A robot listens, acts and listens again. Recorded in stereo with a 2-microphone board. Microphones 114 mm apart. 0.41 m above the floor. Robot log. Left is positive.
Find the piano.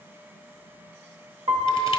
note: The piano: about 60° right or 120° right.
cmd yaw -60
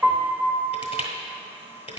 note: So it is at 25° right.
cmd yaw -25
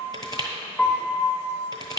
note: The piano is now 10° left.
cmd yaw +10
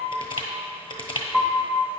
end: Facing the piano, under 1 m away.